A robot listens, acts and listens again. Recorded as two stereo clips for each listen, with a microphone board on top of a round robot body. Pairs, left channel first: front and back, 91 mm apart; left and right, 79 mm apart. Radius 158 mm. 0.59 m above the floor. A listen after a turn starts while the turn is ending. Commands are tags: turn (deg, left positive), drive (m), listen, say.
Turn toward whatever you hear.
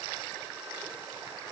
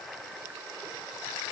<listen/>
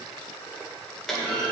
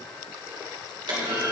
<turn deg="-85"/>
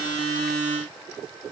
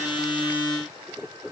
<say>Facing where the clunk came from. I can't hear it now.</say>